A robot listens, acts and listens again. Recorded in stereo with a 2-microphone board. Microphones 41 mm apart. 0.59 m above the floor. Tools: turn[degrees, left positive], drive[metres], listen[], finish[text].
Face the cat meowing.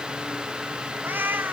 Thought: The cat meowing: about 60° right or 120° right.
Action: turn[-60]
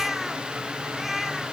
Action: finish[Found it: a cat meowing, straight ahead.]